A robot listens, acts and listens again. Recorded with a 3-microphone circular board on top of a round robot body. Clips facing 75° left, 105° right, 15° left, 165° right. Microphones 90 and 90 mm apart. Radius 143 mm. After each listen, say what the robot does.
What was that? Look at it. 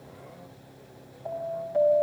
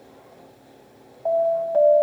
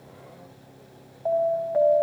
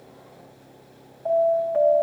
Turn 65° right.
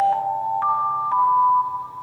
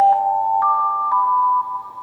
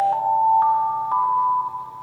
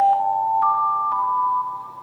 Turn 30° right.
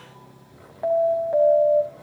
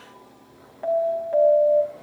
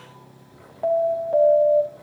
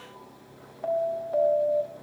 Facing the alarm, over 4 m away.